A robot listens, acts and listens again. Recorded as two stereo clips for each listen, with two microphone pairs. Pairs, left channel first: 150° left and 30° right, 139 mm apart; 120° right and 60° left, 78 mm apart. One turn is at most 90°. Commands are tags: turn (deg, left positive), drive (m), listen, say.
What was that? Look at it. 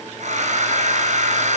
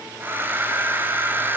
<say>Found it: a hair dryer, straight ahead, 1 to 2 m away.</say>